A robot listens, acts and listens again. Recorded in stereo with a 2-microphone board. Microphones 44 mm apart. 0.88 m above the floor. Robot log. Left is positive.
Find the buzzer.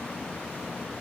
cmd idle
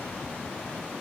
cmd idle
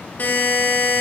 note: The buzzer: about 45° left or 135° left.
cmd yaw +45
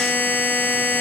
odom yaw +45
note: So it is at 85° left.
cmd yaw +85
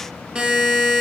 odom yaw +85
note: The buzzer is now 25° right.
cmd yaw -25
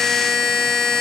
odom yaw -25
note: The buzzer is now 15° left.
cmd yaw +15
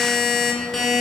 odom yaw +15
end: Facing the buzzer, 1 to 2 m away.